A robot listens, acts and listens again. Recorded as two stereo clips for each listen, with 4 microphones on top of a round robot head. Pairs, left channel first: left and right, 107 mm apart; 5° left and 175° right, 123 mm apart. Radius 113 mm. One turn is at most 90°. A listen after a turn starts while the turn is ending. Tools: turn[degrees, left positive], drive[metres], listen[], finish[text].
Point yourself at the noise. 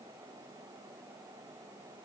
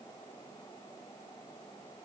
Action: listen[]
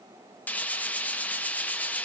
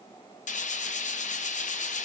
Thought: The frying: 15° left.
Action: turn[15]
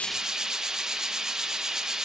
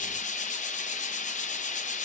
Action: finish[Facing the frying.]